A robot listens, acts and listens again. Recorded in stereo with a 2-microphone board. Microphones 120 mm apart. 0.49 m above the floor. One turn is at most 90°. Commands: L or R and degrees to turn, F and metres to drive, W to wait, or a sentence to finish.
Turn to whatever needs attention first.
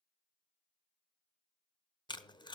W
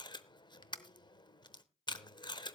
W
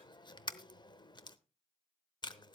I can't make out anything urgent to turn to.